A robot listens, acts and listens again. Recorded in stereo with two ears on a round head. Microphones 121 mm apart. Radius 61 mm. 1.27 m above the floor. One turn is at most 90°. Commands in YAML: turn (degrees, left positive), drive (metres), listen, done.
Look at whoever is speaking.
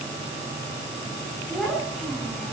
turn: 30
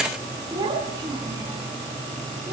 turn: -30
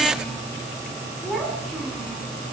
done: "Found it: a child speaking, straight ahead, over 4 m away."